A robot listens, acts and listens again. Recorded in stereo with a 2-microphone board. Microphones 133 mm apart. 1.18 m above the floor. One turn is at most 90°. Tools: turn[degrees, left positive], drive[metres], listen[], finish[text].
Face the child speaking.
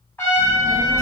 Thought: The child speaking: about 55° right or 125° right.
Action: turn[-55]
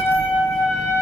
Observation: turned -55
Thought: So it is at 70° right.
Action: turn[-70]
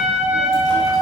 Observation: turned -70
Action: listen[]
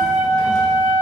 Action: listen[]
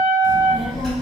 Action: finish[Facing the child speaking.]